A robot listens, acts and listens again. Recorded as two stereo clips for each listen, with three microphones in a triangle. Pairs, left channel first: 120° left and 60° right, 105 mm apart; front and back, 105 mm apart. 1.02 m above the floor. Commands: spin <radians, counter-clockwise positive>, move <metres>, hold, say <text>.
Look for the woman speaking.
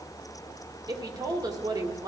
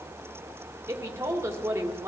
spin -2.01
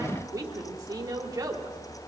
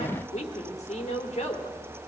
say Facing the woman speaking.